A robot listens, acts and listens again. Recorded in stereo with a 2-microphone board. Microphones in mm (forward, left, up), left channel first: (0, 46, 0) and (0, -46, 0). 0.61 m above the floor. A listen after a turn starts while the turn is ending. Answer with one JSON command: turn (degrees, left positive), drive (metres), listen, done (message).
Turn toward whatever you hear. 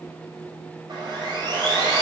{"turn": -50}
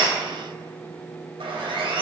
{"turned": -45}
{"turn": -85}
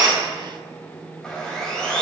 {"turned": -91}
{"done": "Found it: sawing, straight ahead, 2 to 4 m away."}